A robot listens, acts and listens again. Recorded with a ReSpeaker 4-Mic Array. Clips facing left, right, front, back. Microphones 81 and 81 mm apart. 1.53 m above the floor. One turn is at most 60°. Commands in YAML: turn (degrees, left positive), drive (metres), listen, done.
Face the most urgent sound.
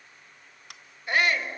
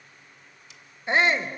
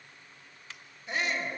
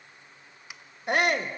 turn: -60
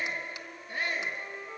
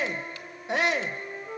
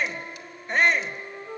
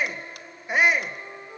turn: -60
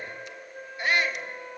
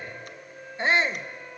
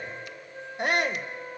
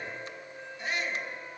turn: -25
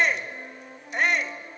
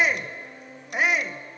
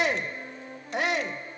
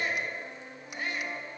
done: "Facing the shout."